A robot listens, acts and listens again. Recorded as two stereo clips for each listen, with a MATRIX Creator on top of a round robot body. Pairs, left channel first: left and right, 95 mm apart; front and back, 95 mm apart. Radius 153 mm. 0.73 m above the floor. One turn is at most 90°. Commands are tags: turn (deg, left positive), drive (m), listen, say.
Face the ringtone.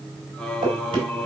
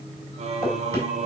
<listen/>
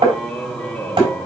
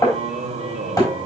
<listen/>
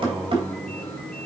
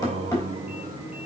<say>I can't make out a ringtone to turn to.</say>